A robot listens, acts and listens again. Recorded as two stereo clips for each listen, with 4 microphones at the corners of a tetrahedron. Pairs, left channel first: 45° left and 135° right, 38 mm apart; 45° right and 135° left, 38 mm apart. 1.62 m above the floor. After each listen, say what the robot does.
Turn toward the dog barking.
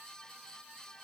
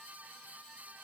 Keep listening.
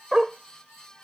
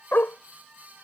Turn 60° right.
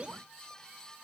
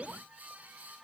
Keep listening.
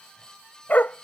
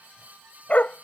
Found it: a dog barking, straight ahead.